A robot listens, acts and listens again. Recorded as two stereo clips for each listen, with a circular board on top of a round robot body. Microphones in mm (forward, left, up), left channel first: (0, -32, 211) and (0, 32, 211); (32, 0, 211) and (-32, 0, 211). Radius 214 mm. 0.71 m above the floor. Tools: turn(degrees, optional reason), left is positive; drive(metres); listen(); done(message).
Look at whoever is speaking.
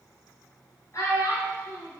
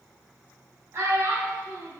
turn(degrees=-135, reason="The child speaking: 135° right.")
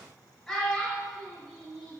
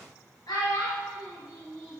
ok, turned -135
turn(degrees=-10, reason="The child speaking is now 10° right.")
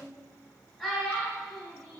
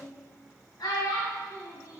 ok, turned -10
done("Found it: a child speaking, straight ahead, under 1 m away.")